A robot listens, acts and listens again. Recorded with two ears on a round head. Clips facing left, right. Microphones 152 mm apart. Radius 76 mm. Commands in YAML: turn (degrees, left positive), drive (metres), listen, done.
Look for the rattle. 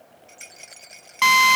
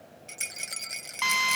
turn: -65
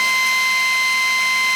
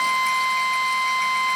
listen: true
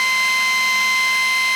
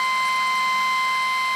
listen: true
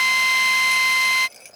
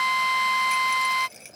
done: "Facing the rattle."